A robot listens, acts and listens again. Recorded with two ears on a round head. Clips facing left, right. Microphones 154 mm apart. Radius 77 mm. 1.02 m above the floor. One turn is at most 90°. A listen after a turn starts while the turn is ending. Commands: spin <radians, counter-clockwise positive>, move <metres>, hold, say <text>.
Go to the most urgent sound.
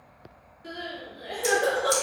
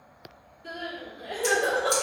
spin 0.35
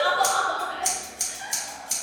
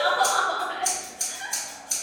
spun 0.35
move 1.0
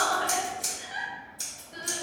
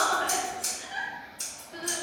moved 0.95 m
spin 0.17
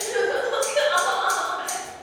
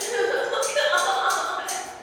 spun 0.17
move 1.0
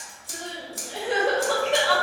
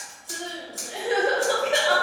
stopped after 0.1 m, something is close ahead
spin -0.17
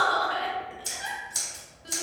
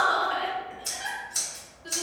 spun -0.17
say Arrived at the crying, straight ahead.